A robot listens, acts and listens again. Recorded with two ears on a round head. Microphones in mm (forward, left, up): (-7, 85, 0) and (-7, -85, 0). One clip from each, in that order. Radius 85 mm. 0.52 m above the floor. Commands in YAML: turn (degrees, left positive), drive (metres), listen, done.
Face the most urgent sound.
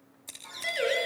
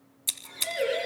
turn: 65
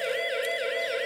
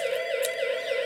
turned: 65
turn: 55
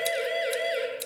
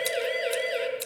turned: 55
turn: 10
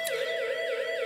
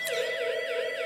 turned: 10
done: "Found it: a siren, straight ahead, over 4 m away."